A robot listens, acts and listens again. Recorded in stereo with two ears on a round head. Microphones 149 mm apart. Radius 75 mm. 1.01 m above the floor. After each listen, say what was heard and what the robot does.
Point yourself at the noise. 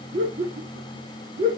The laughter: about 40° right or 140° right. Turn 40° right.
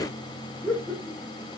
Found it: laughter, straight ahead.